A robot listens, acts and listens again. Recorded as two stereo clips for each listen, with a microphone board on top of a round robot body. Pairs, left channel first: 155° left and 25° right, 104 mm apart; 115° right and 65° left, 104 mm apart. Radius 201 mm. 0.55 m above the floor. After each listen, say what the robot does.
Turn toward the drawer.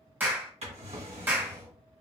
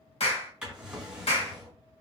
Turn 15° right.
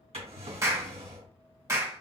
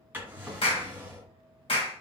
Facing the drawer.